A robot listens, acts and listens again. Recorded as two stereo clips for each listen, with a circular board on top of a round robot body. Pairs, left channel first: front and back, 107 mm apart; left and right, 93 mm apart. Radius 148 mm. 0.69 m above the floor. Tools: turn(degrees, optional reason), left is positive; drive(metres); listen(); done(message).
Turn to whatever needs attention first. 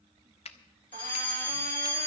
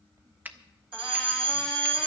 turn(degrees=-75, reason="The fire alarm: 75° right.")
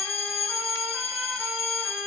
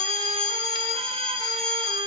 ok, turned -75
done("Found it: a fire alarm, straight ahead.")